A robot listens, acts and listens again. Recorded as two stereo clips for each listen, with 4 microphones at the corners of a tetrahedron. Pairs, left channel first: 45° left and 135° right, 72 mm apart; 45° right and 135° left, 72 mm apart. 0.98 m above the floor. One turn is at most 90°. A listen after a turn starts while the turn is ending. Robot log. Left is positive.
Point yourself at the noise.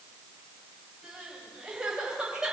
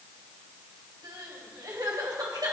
note: The crying: 150° left.
cmd yaw +90
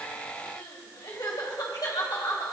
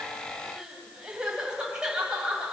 note: The crying is now 55° left.
cmd yaw +55
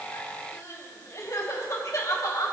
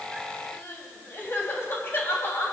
end: Facing the crying.